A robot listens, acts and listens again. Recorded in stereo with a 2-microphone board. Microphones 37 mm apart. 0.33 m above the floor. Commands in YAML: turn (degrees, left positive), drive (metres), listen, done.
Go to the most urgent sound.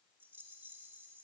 listen: true
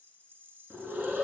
turn: -45
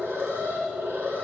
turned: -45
turn: -85
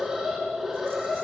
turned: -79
turn: -10
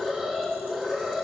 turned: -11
drive: 1.0
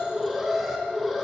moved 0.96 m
drive: 1.0
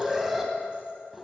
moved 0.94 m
drive: 1.0
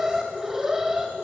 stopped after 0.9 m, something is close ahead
turn: -15
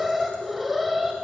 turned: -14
done: "Arrived at the alarm, straight ahead."